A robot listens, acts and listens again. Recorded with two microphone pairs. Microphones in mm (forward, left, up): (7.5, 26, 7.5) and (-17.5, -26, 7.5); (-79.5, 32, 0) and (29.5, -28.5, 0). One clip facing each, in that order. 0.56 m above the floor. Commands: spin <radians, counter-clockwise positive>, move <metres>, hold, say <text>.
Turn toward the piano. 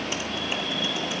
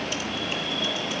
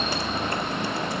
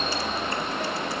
hold
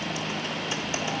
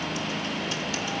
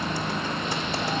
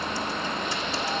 hold
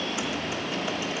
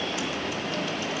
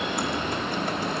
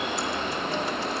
say I can't make out a piano to turn to.